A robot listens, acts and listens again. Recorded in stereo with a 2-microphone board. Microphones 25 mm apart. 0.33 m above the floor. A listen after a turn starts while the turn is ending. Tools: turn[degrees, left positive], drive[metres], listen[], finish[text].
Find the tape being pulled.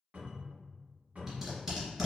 Thought: The tape being pulled: about 15° right or 165° right.
Action: turn[-15]
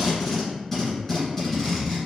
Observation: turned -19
Action: finish[Facing the tape being pulled.]